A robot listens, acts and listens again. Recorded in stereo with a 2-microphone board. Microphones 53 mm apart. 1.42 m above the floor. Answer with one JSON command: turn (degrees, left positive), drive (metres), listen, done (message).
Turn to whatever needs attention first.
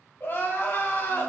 {"turn": 40}
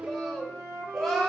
{"done": "Facing the crying, under 1 m away."}